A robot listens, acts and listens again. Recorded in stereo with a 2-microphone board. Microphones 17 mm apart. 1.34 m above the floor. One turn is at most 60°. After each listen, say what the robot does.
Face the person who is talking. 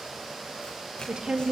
Turn 60° right.
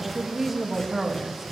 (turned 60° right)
Turn 15° right.
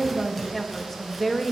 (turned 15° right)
Found it: a woman speaking, straight ahead, 2 to 4 m away.